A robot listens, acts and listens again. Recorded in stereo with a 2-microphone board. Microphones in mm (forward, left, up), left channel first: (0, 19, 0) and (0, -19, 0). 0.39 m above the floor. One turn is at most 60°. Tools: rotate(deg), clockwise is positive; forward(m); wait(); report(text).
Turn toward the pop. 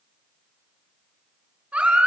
wait()
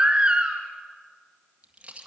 rotate(35)
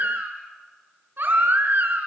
wait()
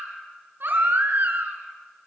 report("I heard a pop, but can't make it out now. It was about straight ahead or 110° right.")